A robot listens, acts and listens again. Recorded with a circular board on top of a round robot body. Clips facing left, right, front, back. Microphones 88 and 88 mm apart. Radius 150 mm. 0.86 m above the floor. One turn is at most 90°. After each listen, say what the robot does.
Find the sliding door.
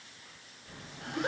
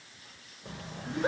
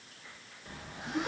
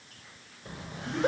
Turn 90° right.
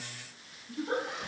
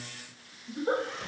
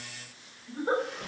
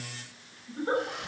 Turn 30° right.
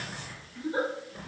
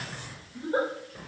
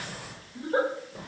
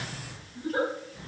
Facing the sliding door.